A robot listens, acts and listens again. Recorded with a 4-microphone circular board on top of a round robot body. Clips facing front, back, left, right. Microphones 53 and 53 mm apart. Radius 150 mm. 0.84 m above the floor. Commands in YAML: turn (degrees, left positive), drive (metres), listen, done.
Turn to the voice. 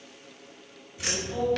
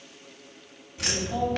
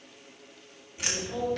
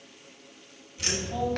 turn: -170
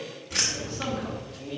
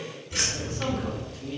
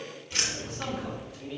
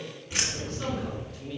turn: 20
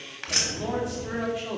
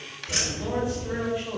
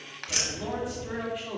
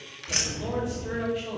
done: "Found it: a man speaking, straight ahead, 2 to 4 m away."